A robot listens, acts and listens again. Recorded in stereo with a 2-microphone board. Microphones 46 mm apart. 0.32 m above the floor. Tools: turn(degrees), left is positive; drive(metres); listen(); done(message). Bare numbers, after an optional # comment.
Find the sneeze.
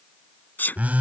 # The sneeze: about 40° left or 140° left.
turn(40)
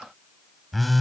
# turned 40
listen()
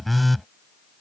done("I heard a sneeze, but can't make it out now. It was about straight ahead or 100° left.")